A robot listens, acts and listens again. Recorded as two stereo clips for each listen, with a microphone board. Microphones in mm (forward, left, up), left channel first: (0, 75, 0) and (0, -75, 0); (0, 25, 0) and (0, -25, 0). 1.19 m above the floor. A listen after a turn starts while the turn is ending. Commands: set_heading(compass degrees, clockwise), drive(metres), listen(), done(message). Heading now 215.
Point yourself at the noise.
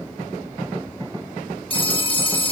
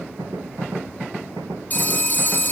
set_heading(180)
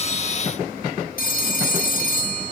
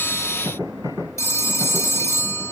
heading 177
set_heading(72)
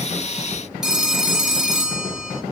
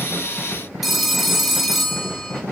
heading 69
done("Facing the phone ringing, 1 to 2 m away.")